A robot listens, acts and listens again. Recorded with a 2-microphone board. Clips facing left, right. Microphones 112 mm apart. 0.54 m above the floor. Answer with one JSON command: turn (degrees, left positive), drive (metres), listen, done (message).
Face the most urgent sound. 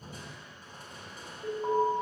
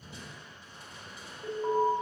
{"turn": 30}
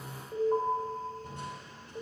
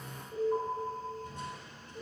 {"turn": 135}
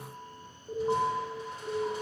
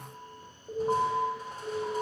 {"turn": -10}
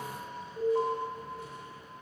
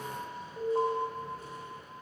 {"done": "Facing the alarm, 2 to 4 m away."}